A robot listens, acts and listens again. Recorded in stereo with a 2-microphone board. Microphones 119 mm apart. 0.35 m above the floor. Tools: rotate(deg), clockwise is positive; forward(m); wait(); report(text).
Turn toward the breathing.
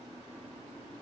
wait()
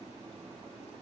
wait()
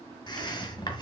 rotate(-40)
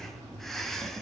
report("Facing the breathing, 1 to 2 m away.")